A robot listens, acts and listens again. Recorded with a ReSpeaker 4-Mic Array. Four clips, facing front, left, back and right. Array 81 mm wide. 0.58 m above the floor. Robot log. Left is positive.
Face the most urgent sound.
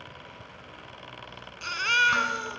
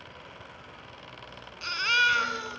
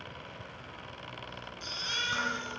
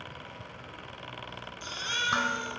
note: The baby crying: 25° left.
cmd yaw +25
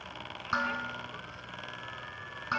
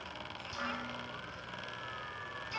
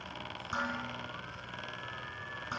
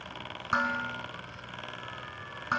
cmd idle
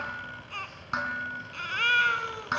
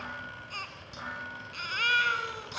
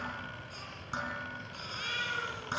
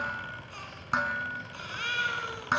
note: The baby crying is now 15° left.
cmd yaw +15
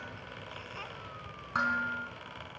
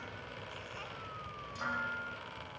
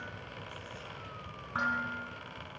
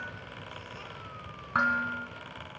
cmd idle
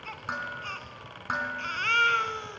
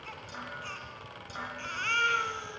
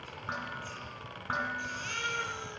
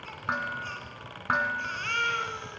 end: Facing the baby crying.